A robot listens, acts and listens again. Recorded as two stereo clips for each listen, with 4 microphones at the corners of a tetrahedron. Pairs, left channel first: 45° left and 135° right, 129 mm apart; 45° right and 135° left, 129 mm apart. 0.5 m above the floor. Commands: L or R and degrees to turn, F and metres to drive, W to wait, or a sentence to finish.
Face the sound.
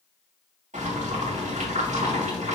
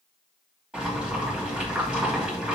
R145
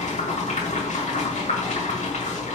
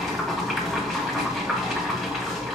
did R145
L45
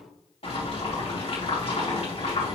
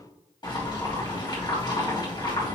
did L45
L10
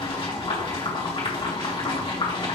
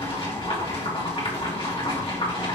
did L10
Found it: boiling, straight ahead, 2 to 4 m away.